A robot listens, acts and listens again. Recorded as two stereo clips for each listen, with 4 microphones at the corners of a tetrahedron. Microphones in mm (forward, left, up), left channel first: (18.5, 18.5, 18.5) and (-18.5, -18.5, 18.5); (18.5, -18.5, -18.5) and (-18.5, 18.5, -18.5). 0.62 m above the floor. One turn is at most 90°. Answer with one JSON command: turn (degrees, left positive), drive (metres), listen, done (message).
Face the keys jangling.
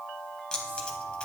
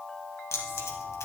{"turn": -30}
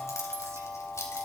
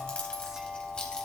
{"turn": 25}
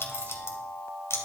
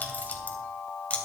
{"turn": 15}
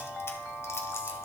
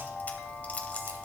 {"listen": true}
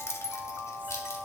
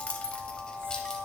{"turn": 25}
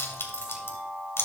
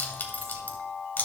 {"done": "Found it: keys jangling, straight ahead."}